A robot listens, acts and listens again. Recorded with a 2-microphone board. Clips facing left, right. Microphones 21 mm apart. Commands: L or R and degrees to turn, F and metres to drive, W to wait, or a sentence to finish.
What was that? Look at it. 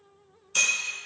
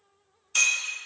R30
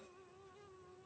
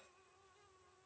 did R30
W
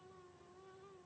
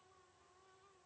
I heard breaking glass, but can't make it out now. It was about 20° left or 140° right.